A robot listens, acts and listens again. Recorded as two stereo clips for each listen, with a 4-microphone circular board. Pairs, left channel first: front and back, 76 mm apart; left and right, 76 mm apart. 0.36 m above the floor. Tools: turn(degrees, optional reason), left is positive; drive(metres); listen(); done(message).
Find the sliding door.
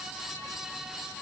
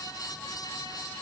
listen()
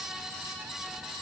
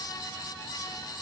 listen()
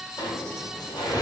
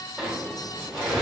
done("Found it: a sliding door, straight ahead, 1 to 2 m away.")